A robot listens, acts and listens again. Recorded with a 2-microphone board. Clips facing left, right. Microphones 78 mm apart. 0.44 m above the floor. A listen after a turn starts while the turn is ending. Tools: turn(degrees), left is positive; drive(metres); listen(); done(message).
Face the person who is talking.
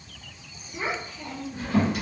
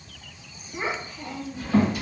turn(degrees=-35)
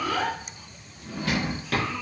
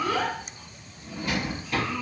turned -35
done("Found it: a child speaking, straight ahead.")